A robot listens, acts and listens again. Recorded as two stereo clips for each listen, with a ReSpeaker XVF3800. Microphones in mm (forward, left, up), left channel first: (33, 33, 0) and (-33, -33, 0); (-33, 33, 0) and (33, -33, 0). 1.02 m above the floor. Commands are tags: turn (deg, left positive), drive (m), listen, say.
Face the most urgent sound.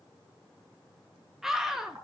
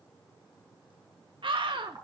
<turn deg="-50"/>
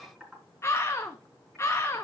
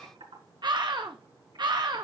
<turn deg="-15"/>
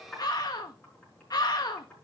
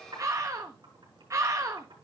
<say>Found it: a scream, straight ahead, 1 to 2 m away.</say>